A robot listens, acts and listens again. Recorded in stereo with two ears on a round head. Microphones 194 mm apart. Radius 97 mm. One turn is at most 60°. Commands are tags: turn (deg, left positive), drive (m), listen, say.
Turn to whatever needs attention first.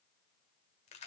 <listen/>
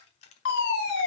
<turn deg="55"/>
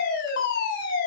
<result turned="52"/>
<turn deg="60"/>
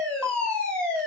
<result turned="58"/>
<say>Found it: a fire alarm, straight ahead, over 4 m away.</say>